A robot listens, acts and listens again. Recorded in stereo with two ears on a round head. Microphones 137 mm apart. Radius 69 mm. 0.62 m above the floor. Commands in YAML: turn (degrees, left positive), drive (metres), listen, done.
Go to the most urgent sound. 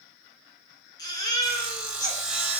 turn: 25
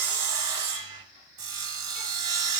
listen: true
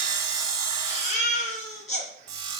turn: 130
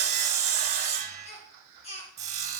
turn: 40
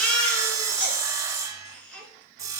turn: 10
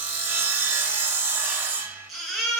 drive: 1.0
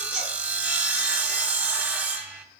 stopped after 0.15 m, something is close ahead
listen: true
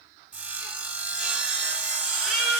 done: "Something is in my way. I am facing the baby crying but have not reached it."